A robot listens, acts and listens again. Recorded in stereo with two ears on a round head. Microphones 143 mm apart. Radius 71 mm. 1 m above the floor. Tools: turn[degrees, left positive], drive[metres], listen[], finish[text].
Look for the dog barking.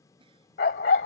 Thought: The dog barking: about 65° left or 115° left.
Action: turn[65]
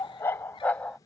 Action: finish[Facing the dog barking.]